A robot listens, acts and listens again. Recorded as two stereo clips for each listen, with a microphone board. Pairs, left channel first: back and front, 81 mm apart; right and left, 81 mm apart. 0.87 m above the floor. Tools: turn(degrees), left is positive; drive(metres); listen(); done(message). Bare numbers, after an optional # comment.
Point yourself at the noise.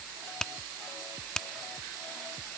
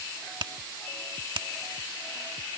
# The finger snap: 100° left.
turn(100)
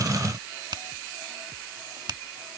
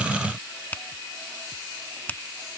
# The finger snap is now 20° right.
turn(-20)
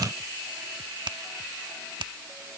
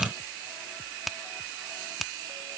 done("Found it: a finger snap, straight ahead.")